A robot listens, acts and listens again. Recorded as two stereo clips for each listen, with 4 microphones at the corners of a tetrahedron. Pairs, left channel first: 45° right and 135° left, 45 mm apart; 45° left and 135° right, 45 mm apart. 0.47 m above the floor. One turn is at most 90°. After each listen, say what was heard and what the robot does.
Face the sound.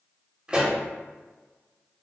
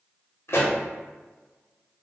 The pop: 70° left. Turn 70° left.
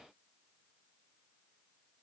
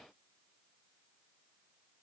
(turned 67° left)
Facing where the pop came from. I can't hear it now.